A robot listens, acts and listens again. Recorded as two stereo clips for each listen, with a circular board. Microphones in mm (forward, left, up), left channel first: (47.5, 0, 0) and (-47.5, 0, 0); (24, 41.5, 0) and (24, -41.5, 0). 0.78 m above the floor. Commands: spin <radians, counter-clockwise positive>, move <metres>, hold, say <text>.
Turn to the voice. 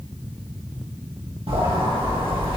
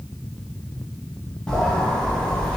hold
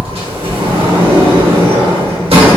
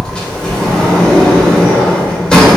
hold
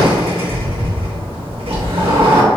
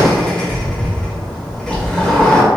say I can't make out anyone speaking to turn to.